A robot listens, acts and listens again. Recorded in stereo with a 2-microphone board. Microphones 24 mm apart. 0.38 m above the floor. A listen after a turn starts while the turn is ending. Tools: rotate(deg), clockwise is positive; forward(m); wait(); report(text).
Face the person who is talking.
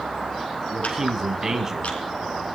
rotate(15)
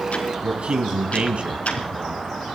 rotate(130)
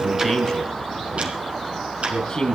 rotate(-30)
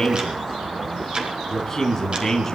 rotate(-15)
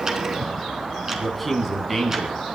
report("Facing the man speaking.")